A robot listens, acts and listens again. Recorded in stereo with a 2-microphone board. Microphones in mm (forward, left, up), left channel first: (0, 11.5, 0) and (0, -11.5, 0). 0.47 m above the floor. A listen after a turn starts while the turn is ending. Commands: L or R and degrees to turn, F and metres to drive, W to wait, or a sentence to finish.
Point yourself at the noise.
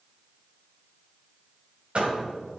R55
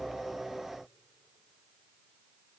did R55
W
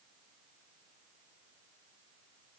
I heard a door slam, but can't make it out now. It was about straight ahead or 70° right.